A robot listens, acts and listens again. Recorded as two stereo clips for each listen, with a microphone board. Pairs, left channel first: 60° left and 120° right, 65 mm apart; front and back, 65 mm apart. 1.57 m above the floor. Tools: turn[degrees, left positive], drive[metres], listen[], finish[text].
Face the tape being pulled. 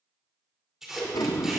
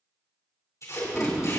Thought: The tape being pulled: 40° right.
Action: turn[-40]
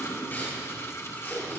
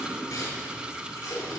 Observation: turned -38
Action: finish[Found it: tape being pulled, straight ahead.]